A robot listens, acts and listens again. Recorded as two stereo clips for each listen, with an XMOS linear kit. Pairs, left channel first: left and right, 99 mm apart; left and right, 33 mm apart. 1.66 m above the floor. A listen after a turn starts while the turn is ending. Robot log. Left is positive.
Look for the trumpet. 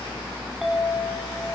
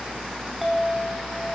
cmd idle
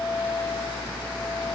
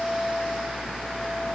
cmd idle
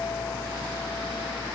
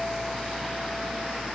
end: I can't make out a trumpet, only a clink.